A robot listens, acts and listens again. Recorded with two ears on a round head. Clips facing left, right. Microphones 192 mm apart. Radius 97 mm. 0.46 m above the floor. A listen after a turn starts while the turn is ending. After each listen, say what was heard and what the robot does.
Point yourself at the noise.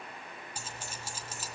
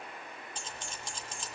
Turn 30° left.
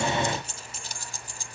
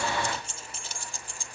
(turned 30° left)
So it is at 140° left. Turn 140° left.
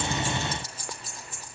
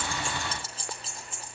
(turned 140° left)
The keys jangling is now 25° right. Turn 25° right.
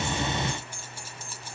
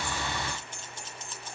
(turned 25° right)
The keys jangling is now 10° left. Turn 10° left.
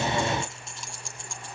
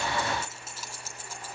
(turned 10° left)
Facing the keys jangling.